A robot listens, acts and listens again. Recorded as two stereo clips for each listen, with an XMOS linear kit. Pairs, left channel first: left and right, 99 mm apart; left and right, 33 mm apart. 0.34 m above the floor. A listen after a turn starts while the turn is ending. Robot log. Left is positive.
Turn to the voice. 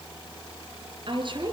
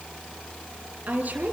note: The woman speaking: about 55° right or 125° right.
cmd yaw -55
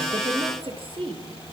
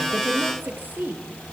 note: So it is at 70° right.
cmd yaw -70
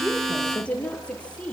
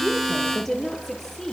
note: The woman speaking is now 10° left.
cmd yaw +10
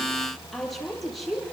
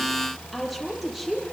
end: Found it: a woman speaking, straight ahead, over 4 m away.